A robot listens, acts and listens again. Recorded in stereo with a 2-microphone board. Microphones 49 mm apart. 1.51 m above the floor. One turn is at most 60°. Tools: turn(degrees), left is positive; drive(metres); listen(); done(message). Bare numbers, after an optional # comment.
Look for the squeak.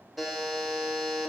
listen()
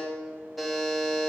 listen()
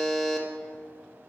done("I can't make out a squeak, only a buzzer.")